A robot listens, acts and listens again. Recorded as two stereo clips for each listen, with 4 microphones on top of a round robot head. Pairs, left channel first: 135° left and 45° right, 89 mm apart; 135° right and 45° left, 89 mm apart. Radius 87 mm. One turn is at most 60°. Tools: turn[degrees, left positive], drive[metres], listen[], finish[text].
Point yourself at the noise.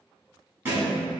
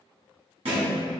Thought: The thud: 20° left.
Action: turn[20]
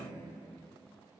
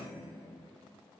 Action: finish[Facing where the thud came from. I can't hear it now.]